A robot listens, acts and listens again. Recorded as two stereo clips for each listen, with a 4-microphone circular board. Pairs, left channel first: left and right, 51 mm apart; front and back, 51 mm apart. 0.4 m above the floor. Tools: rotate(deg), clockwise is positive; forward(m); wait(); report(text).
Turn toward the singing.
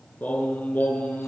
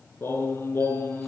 rotate(-40)
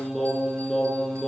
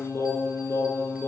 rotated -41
rotate(-10)
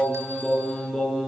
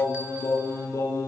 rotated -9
rotate(-10)
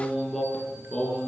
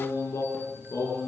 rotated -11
rotate(-10)
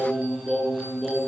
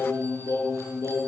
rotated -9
report("Found it: singing, straight ahead, over 4 m away.")